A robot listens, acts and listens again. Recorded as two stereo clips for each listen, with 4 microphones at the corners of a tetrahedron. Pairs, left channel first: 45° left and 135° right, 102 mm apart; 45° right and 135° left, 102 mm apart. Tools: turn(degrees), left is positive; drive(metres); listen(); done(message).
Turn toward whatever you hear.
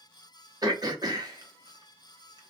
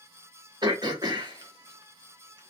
turn(degrees=180)
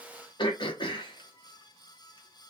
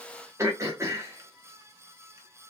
turn(degrees=75)
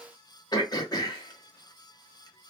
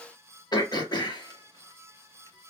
done("Facing the throat clearing.")